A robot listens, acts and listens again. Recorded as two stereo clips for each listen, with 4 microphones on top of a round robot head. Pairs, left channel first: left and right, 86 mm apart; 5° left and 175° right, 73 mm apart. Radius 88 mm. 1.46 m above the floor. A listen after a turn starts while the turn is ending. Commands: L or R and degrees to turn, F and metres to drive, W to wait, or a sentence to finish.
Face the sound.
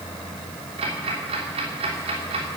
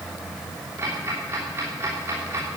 R110
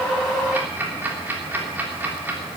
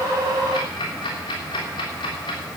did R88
R20
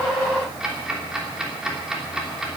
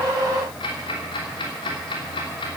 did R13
Found it: ticking, straight ahead, 2 to 4 m away.